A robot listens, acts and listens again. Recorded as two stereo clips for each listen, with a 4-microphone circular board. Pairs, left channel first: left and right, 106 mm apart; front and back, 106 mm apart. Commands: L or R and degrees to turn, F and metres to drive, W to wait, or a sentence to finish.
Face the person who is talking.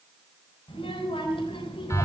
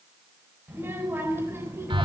L115
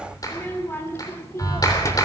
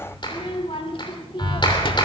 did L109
L30
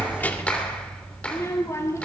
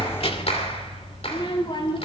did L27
L30
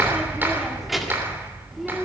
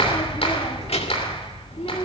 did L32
W
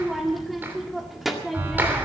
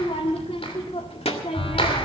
Found it: a child speaking, straight ahead, 1 to 2 m away.